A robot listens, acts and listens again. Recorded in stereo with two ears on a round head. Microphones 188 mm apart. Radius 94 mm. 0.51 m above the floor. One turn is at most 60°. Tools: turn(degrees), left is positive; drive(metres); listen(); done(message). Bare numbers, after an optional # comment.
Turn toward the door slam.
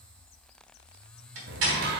# The door slam: about 70° right or 110° right.
turn(-60)
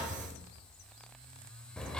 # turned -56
listen()
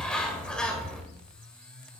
done("I heard a door slam, but can't make it out now. It was about 15° right or 55° right.")